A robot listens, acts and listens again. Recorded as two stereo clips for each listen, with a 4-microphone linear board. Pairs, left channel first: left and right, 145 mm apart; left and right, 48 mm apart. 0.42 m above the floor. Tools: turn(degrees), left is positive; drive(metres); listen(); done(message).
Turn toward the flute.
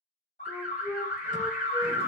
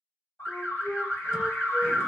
turn(degrees=30)
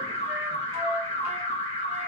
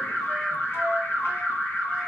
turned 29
listen()
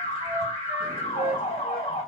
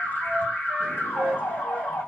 turn(degrees=-15)
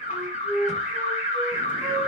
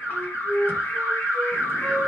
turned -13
done("Found it: a flute, straight ahead, 1 to 2 m away.")